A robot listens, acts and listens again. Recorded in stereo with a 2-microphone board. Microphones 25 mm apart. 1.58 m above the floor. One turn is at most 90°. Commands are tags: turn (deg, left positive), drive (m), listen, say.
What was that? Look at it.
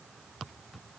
<listen/>
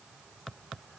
<listen/>
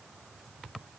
<say>I can't make out anything to turn to.</say>